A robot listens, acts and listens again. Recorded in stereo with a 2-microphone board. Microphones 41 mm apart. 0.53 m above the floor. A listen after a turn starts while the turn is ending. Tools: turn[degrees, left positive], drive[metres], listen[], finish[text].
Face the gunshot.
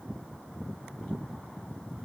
Action: listen[]
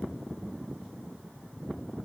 Action: listen[]
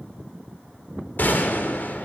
Thought: The gunshot: about 50° left or 130° left.
Action: turn[50]
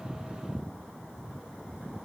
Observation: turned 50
Action: listen[]
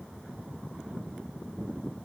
Action: finish[I heard a gunshot, but can't make it out now. It was about straight ahead or 80° left.]